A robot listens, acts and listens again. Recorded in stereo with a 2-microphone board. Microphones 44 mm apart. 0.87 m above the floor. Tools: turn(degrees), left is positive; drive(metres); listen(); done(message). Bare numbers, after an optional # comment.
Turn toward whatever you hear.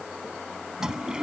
# The toilet flushing: about 15° right or 165° right.
turn(-15)
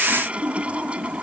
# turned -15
# So it is at 150° right.
turn(-150)
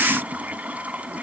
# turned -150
# The toilet flushing is now 30° right.
turn(-30)
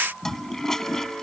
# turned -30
# The toilet flushing is now 15° left.
turn(15)
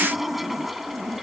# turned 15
done("Found it: a toilet flushing, straight ahead.")